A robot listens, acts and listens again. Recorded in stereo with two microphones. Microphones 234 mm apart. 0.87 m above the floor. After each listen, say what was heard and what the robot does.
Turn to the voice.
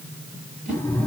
Keep listening.
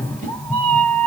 Keep listening.
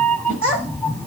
The child speaking: about 70° right or 110° right. Turn 70° right.
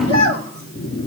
So it is at 45° right. Turn 45° right.
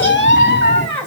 Facing the child speaking, over 4 m away.